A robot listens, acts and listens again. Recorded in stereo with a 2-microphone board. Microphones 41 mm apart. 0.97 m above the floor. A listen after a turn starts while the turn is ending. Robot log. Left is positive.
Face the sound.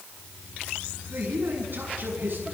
note: The man speaking: about 50° right or 130° right.
cmd yaw -50
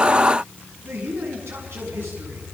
note: So it is at 75° right.
cmd yaw -75
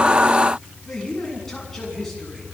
note: The man speaking is now 10° left.
cmd yaw +10
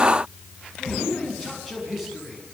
end: Found it: a man speaking, straight ahead.